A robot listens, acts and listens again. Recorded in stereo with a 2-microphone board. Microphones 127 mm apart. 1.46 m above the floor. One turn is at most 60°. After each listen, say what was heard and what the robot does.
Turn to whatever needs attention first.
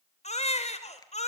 The baby crying: about 60° left or 120° left. Turn 60° left.
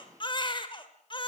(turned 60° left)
So it is at 45° left. Turn 45° left.
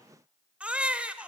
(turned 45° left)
The baby crying is now 10° right. Turn 10° right.
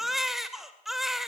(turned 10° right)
Facing the baby crying, 2 to 4 m away.